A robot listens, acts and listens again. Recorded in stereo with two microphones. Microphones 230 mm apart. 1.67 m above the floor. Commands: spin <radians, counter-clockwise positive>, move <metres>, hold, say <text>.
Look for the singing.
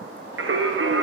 spin -1.05
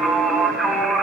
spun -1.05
say Facing the singing.